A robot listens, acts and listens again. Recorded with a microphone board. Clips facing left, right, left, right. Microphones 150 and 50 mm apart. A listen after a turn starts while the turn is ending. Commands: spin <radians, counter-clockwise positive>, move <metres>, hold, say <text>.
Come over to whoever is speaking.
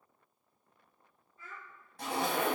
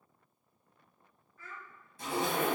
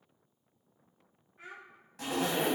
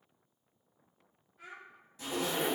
spin 0.44
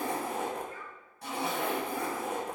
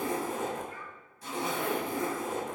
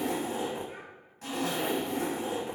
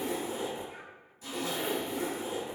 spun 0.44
hold
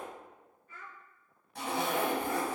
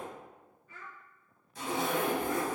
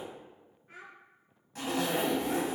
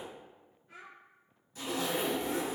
spin 2.27
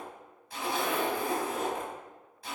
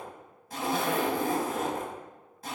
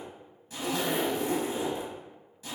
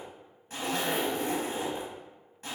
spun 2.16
hold
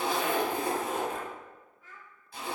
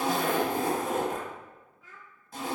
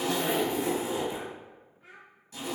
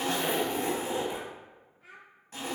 move 1.0
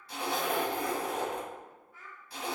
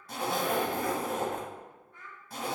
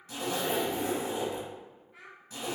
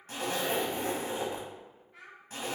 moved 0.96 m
move 1.0
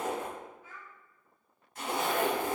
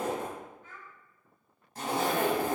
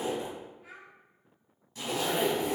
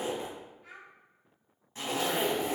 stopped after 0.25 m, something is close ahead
spin 0.17
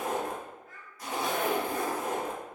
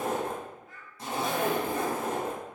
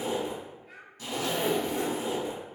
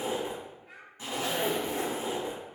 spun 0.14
say I am next to the child speaking.